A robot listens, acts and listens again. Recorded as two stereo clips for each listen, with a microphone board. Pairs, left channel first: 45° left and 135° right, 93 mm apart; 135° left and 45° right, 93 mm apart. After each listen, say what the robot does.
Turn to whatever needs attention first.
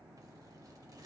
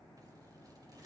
Keep listening.
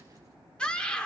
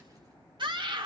Turn 30° right.
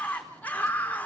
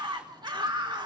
Turn 25° right.
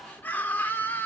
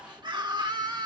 Turn 20° right.
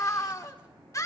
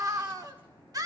Found it: a scream, straight ahead.